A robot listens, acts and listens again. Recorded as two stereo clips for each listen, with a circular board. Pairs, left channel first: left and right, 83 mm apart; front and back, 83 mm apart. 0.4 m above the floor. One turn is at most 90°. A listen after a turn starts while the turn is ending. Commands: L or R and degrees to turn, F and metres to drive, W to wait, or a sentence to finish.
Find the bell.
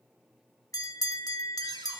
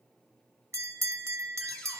L90
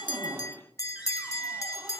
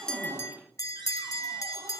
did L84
L45
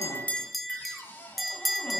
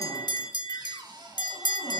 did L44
Facing the bell.